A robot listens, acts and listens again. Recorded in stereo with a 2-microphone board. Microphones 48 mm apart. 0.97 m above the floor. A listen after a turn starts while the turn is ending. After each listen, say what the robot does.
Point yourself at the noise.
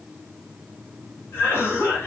Turn 60° left.
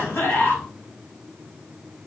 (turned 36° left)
Turn 50° left.
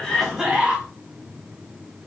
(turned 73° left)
Turn 25° right.
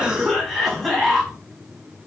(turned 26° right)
Facing the cough, 1 to 2 m away.